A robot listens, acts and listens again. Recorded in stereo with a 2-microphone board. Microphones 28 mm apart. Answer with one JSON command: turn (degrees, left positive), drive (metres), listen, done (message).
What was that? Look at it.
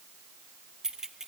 {"turn": -20}
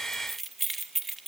{"done": "Found it: keys jangling, straight ahead."}